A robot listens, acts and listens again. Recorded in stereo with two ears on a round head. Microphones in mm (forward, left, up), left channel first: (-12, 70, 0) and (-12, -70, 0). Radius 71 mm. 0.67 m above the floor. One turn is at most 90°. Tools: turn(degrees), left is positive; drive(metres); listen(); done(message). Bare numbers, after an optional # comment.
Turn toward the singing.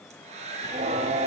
# The singing: about 50° right or 130° right.
turn(-50)
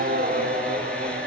# So it is at 40° right.
turn(-40)
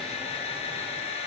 listen()
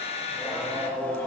# The singing is now 10° left.
turn(10)
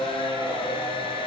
# The singing is now 10° left.
turn(10)
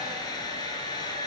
listen()
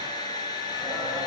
listen()
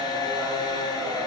done("Facing the singing, 2 to 4 m away.")